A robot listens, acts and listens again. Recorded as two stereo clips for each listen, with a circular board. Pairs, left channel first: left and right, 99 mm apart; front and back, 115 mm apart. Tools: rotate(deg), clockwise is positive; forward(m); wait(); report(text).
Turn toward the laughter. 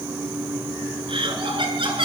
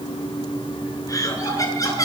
rotate(60)
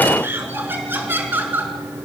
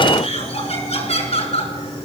rotate(20)
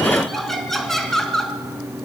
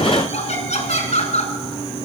report("Found it: laughter, straight ahead.")